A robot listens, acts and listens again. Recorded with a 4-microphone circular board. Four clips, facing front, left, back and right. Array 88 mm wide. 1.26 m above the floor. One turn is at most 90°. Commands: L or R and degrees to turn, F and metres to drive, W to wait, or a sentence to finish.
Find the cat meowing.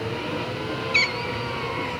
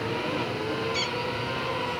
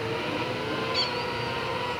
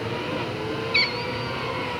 R25
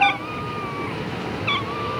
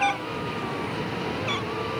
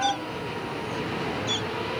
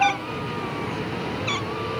Facing the cat meowing.